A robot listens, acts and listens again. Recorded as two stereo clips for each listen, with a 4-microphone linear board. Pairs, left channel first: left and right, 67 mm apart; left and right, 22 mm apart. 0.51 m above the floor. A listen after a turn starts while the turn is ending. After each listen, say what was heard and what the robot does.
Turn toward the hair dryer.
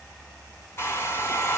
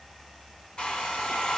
The hair dryer: about 35° left or 145° left. Turn 35° left.
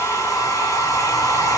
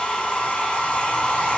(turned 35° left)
So it is at 100° left. Turn 100° left.
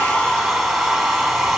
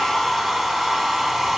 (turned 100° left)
Found it: a hair dryer, straight ahead, 1 to 2 m away.